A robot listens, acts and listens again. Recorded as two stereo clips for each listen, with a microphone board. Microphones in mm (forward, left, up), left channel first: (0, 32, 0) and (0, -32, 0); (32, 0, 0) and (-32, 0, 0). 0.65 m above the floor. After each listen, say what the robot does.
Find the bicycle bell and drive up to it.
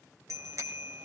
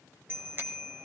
Turn 125° right.
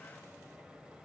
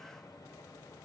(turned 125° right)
Turn 15° right.
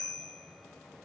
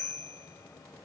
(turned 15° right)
Drive 1.0 m forward.
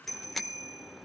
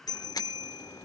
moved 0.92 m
Drive 1.0 m forward.
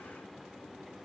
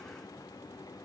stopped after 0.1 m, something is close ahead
Keep listening.
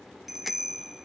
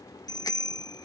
Arrived at the bicycle bell, straight ahead.